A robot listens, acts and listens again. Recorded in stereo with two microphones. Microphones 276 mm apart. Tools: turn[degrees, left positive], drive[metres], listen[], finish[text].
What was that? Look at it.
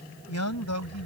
Action: turn[90]
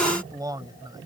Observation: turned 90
Thought: So it is at 15° right.
Action: turn[-15]
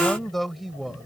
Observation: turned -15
Action: finish[Facing the man speaking.]